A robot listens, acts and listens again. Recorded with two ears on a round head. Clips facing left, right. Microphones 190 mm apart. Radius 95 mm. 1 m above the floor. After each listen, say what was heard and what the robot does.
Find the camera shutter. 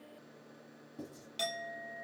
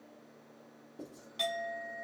Keep listening.
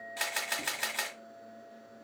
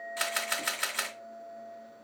Turn 30° left.
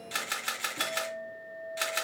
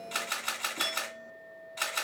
So it is at 150° left. Turn 150° left.
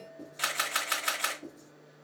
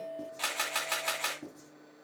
The camera shutter is now 15° left. Turn 15° left.
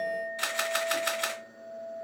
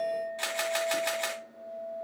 Found it: a camera shutter, straight ahead.